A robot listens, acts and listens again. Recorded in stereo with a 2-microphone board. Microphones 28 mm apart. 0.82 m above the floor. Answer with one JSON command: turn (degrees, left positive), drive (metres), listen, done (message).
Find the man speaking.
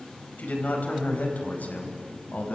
{"turn": 90}
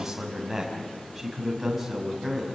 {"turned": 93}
{"done": "Found it: a man speaking, straight ahead."}